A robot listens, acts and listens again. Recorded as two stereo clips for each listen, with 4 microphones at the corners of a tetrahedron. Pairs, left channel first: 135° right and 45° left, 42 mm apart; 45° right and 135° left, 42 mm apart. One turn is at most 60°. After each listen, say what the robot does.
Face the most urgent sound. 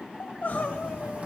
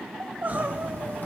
Turn 60° left.
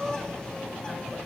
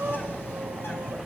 Turn 60° left.
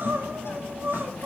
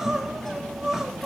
Turn 60° left.
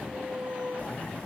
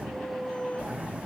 Facing the crying, under 1 m away.